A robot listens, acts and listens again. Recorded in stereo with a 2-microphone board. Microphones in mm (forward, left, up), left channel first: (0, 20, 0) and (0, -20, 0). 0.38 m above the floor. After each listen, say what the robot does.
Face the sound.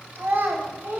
Turn 60° right.
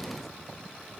Keep listening.
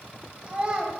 Turn 35° right.
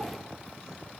Keep listening.
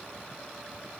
Keep listening.
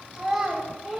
Turn 15° right.
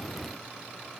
Keep listening.
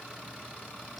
Keep listening.
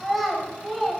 Found it: a child speaking, straight ahead.